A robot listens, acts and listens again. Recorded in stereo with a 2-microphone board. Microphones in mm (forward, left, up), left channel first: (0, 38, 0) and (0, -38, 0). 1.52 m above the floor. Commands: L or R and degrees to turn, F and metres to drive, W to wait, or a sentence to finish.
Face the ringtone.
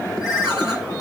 R30
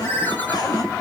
L20
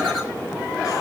W
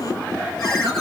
W
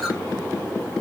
Facing where the ringtone came from. I can't hear it now.